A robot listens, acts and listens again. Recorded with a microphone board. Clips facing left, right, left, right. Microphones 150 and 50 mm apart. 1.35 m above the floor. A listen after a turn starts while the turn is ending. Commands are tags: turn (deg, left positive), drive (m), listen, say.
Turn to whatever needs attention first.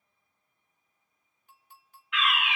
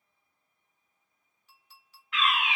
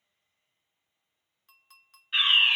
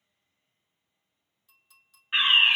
<turn deg="-35"/>
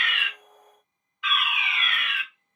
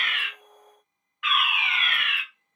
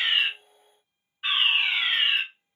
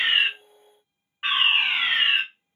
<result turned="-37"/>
<turn deg="-100"/>
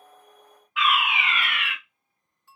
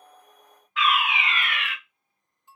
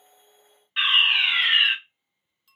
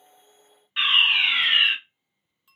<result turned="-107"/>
<say>Facing the fire alarm, 1 to 2 m away.</say>